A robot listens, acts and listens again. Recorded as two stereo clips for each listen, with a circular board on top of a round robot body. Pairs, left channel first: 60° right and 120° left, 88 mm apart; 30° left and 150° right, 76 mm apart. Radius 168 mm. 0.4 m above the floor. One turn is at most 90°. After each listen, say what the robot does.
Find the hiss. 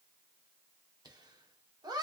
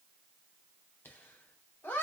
Keep listening.
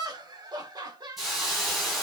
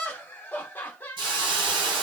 Turn 90° right.
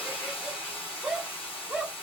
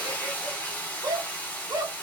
Turn 40° right.
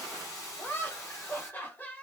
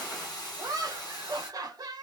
Facing the hiss, 1 to 2 m away.